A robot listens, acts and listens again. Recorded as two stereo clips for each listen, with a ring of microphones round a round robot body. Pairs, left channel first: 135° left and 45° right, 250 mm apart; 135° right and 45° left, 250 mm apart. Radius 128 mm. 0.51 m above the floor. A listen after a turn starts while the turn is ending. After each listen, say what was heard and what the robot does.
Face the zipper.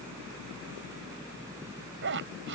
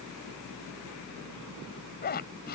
The zipper: 85° right. Turn 85° right.
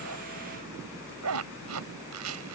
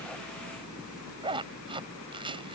The zipper is now 25° right. Turn 25° right.
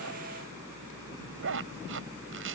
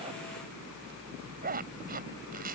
The zipper is now 10° right. Turn 10° right.
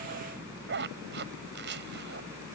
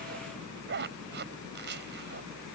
Found it: a zipper, straight ahead.